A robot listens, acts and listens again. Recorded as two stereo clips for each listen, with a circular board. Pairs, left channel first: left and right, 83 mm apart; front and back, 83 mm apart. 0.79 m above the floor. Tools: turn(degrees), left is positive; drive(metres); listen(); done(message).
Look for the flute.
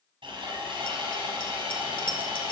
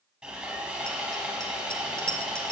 listen()
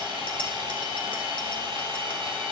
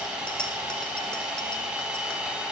listen()
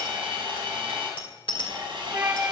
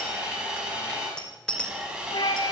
turn(degrees=-30)
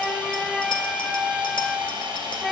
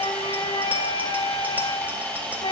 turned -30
done("Facing the flute.")